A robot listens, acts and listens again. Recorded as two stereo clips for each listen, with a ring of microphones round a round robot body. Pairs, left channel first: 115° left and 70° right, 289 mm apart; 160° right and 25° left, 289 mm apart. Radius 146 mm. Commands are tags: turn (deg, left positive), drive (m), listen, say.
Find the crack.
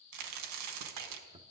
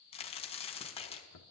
<turn deg="-90"/>
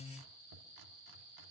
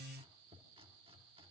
<say>Facing where the crack came from. I can't hear it now.</say>